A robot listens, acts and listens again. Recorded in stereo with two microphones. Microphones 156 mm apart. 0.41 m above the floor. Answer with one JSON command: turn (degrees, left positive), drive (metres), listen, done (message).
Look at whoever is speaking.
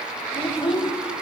{"turn": 30}
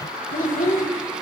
{"turn": 115}
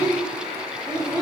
{"turn": -30}
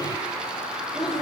{"listen": true}
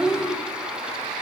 {"done": "Found it: a child speaking, straight ahead."}